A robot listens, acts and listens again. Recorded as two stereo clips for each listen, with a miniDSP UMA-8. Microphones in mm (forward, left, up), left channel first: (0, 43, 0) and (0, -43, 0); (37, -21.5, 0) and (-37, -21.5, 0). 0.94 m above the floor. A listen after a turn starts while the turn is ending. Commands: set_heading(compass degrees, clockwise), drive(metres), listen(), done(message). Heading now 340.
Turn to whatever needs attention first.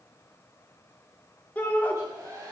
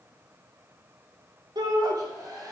set_heading(180)
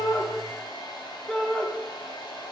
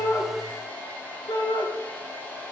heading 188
done("Facing the shout, 2 to 4 m away.")